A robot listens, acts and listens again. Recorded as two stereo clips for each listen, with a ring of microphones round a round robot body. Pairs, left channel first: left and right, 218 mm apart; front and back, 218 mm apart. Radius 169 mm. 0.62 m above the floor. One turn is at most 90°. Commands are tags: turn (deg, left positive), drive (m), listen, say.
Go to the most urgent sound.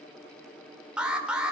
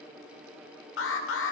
<drive m="1.0"/>
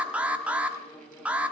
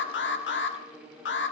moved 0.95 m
<drive m="1.0"/>
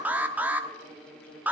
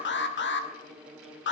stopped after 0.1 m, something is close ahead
<turn deg="-10"/>
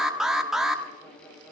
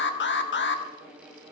<say>I am next to the alarm.</say>